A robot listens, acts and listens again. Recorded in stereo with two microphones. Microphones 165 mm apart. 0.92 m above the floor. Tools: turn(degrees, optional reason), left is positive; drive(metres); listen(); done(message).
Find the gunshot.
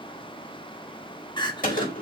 turn(degrees=55, reason="The gunshot: about 55° left or 125° left.")
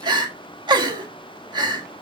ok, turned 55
listen()
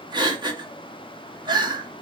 done("I heard a gunshot, but can't make it out now. It was about straight ahead or 70° left.")